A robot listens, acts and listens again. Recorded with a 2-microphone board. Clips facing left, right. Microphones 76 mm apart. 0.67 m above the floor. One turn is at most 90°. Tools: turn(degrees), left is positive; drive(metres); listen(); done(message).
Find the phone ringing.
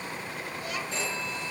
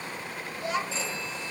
turn(degrees=50)
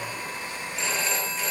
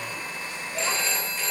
done("Found it: a phone ringing, straight ahead.")